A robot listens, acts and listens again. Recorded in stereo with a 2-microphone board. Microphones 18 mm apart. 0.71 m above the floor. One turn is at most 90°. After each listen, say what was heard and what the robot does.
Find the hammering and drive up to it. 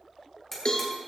The hammering: about 15° left or 165° left. Turn 15° left.
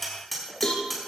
Drive 1.0 m forward.
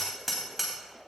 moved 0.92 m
Drive 1.0 m forward.
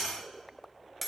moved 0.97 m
The hammering is now 10° right. Turn 10° right.
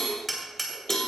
Drive 1.0 m forward.
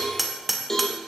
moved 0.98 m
Drive 1.0 m forward.
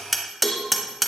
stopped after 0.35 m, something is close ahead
I am next to the hammering.